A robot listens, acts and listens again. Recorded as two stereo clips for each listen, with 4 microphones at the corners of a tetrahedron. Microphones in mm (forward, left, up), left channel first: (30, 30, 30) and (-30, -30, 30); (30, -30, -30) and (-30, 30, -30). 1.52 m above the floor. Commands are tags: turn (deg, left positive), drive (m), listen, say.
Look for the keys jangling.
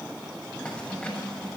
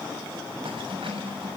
<turn deg="120"/>
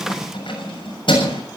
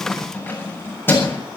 <turn deg="20"/>
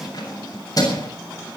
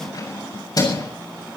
<say>Found it: keys jangling, straight ahead, over 4 m away.</say>